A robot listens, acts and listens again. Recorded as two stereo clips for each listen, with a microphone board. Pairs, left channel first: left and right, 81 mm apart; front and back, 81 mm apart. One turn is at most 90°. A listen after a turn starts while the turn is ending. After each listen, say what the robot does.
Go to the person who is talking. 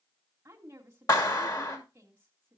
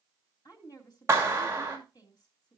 Turn 35° right.
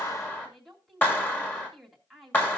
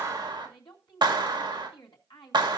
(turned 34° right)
Drive 1.0 m forward.
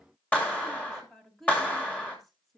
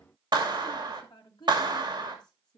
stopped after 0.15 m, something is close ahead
Blocked. The woman speaking is further on, straight ahead.